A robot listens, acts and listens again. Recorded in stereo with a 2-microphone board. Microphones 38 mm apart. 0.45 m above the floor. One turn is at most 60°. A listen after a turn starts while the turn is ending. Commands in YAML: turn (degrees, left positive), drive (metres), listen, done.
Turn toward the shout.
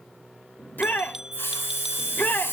turn: 50
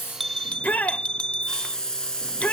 turn: 60
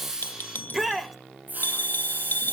turn: -10
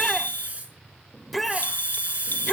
done: "Found it: a shout, straight ahead, 1 to 2 m away."